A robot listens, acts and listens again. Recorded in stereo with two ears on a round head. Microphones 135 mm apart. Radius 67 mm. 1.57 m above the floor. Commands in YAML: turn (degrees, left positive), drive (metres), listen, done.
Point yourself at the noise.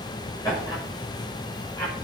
turn: 20
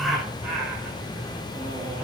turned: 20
done: "Facing the laughter."